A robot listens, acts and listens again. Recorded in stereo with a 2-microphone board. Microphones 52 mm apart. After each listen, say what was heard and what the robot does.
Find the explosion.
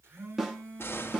The explosion: about 55° left or 125° left. Turn 55° left.
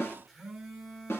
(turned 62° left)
Keep listening.
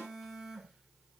I heard an explosion, but can't make it out now. It was about 10° right or 65° left.